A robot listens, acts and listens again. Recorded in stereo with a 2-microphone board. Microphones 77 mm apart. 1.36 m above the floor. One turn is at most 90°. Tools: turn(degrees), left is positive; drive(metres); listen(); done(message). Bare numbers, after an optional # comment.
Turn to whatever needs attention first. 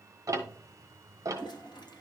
listen()
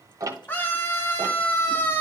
# The scream: about 25° left or 155° left.
turn(25)
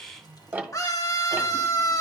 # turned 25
# So it is at 130° left.
turn(90)
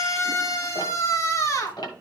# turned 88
# The scream is now 40° left.
turn(40)
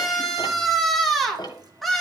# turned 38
done("Facing the scream, 2 to 4 m away.")